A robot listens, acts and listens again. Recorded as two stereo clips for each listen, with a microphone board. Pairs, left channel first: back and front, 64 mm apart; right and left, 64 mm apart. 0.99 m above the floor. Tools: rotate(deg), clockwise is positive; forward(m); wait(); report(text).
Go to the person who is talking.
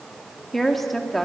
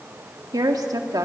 rotate(-90)
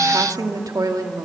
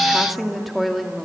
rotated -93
forward(1.0)
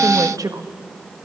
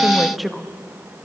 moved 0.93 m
forward(1.0)
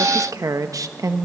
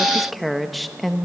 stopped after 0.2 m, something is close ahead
report("Arrived at the woman speaking, straight ahead.")